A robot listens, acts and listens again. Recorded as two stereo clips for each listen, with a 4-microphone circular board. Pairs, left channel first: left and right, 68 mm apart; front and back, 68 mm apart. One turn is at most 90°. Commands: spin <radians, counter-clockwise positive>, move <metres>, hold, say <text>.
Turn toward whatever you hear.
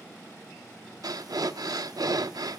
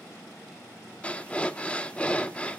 spin -1.22
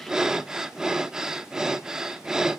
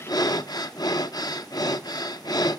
spin -0.17
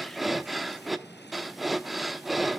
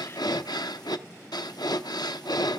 say Facing the breathing.